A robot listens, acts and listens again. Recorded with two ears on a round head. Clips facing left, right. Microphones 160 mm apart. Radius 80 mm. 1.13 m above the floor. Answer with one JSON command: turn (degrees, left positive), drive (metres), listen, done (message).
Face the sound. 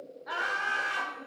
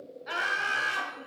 {"turn": -30}
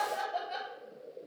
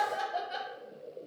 {"done": "Found it: laughter, straight ahead."}